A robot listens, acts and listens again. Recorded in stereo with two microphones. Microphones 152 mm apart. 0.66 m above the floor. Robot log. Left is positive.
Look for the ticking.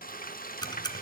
note: The ticking: about 30° left or 150° left.
cmd yaw +30
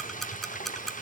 end: Found it: ticking, straight ahead.